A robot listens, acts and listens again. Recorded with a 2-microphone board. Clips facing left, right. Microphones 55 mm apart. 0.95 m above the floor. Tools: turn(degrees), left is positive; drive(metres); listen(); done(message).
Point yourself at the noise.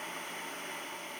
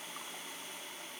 listen()
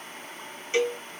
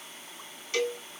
turn(degrees=25)
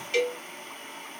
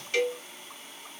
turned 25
done("Found it: a cowbell, straight ahead.")